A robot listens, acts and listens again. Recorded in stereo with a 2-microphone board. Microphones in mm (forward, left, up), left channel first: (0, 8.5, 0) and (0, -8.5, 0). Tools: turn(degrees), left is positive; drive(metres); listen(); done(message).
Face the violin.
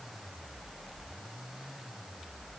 listen()
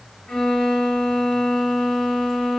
turn(degrees=90)
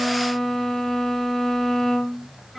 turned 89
done("Found it: a violin, straight ahead, 2 to 4 m away.")